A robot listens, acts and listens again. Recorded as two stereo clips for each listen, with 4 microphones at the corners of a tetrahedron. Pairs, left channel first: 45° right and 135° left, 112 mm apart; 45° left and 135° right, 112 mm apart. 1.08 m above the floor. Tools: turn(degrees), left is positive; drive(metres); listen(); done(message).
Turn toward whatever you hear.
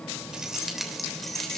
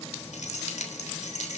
turn(degrees=40)
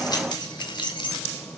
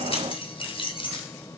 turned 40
done("Found it: keys jangling, straight ahead.")